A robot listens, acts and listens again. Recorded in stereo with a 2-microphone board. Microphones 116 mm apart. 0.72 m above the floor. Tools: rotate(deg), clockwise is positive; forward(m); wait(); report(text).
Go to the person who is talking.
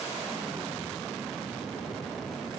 wait()
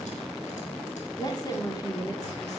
rotate(-30)
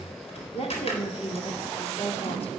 rotate(-115)
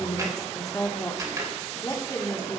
rotate(-30)
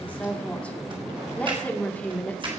rotate(-10)
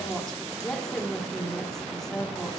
forward(1.0)
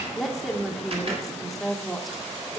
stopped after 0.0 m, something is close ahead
report("Something is in my way. I am facing the woman speaking but have not reached it.")